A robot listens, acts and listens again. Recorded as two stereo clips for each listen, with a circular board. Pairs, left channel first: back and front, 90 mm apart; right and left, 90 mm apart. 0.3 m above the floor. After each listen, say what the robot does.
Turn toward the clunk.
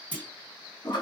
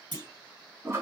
Turn 105° left.
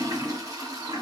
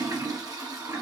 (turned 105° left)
I heard a clunk from this way, but can't make it out now.